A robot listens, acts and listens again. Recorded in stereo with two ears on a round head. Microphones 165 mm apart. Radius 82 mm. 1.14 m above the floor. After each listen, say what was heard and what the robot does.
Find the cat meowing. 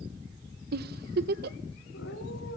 The cat meowing: about 75° left or 105° left. Turn 75° left.
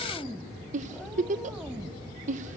Found it: a cat meowing, straight ahead, 2 to 4 m away.